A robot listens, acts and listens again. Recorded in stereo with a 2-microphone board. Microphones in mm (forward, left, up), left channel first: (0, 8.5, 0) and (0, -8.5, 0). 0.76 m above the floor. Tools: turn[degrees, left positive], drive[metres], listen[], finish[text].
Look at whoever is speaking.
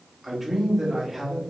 Action: turn[-30]
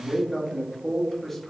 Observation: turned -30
Thought: So it is at 20° left.
Action: turn[20]
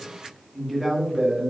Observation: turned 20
Action: finish[Found it: a man speaking, straight ahead.]